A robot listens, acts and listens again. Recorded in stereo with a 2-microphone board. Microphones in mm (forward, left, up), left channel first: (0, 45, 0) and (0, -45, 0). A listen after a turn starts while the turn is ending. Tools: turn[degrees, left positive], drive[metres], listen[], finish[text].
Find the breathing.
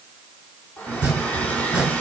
Action: listen[]
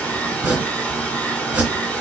Action: listen[]
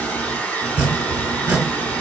Action: finish[I can't make out breathing to turn to.]